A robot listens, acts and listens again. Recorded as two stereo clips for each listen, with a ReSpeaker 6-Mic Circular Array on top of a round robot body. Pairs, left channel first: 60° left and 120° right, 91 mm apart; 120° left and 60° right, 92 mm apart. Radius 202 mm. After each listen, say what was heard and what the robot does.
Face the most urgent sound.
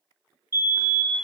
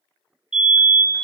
The fire alarm: 20° left. Turn 20° left.
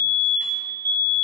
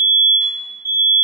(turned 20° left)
Found it: a fire alarm, straight ahead, 2 to 4 m away.